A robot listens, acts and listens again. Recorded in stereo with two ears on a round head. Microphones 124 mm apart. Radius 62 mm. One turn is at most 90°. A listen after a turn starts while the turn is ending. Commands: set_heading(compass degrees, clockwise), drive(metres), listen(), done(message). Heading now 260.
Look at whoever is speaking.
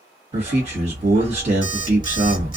set_heading(310)
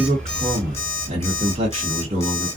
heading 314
set_heading(14)
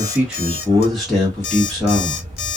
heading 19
done("Facing the man speaking.")